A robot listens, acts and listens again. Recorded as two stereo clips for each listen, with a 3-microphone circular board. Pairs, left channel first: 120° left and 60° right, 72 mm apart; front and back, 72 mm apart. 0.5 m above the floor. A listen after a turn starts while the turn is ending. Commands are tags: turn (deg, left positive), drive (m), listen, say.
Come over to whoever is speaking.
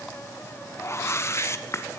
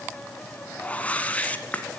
<listen/>
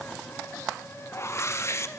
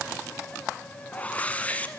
<listen/>
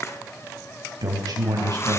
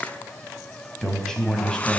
<turn deg="-80"/>
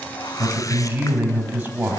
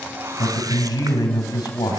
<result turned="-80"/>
<drive m="1.0"/>
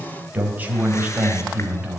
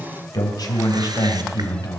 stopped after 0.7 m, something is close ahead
<say>Something is in my way. I am facing the man speaking but have not reached it.</say>